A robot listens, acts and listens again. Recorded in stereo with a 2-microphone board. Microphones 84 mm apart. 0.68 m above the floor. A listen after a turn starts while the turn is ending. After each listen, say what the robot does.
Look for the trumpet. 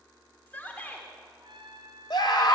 Turn 70° right.
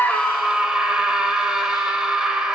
Keep listening.
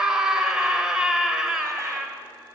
Keep listening.
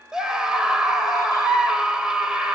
I heard a trumpet, but can't make it out now. It was about straight ahead or 40° right.